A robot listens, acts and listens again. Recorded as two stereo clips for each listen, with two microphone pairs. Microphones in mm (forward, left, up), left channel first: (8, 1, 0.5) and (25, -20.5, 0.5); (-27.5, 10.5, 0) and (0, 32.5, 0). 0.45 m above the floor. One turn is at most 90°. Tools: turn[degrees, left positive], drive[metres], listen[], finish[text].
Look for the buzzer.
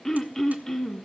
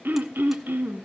Action: listen[]
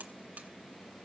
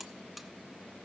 Thought: The buzzer: 45° right.
Action: turn[-45]
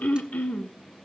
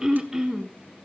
Action: listen[]
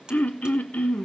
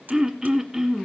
Action: finish[Facing the buzzer, under 1 m away.]